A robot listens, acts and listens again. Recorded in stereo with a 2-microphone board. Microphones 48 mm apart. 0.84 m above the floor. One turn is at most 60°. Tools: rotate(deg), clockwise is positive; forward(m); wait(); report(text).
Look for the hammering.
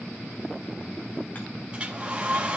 wait()
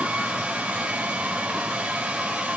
wait()
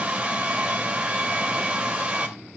report("I can't make out hammering, only a hair dryer.")